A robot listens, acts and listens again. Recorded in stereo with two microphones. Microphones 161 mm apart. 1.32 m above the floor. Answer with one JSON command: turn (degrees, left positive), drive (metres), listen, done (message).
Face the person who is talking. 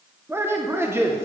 {"turn": -15}
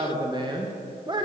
{"turn": -150}
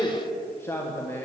{"turn": 15}
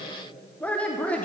{"turn": 10}
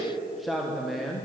{"done": "Found it: a man speaking, straight ahead."}